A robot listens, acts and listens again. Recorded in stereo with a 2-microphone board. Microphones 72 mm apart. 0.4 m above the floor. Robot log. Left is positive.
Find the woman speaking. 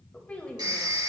note: The woman speaking: about 15° left or 165° left.
cmd yaw +15
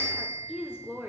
note: So it is at 20° right.
cmd yaw -20
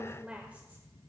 note: The woman speaking is now 20° right.
cmd yaw -20
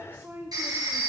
note: The woman speaking is now 35° right.
cmd yaw -35
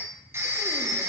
cmd idle
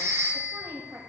note: The woman speaking is now 35° right.
cmd yaw -35
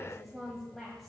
end: Facing the woman speaking.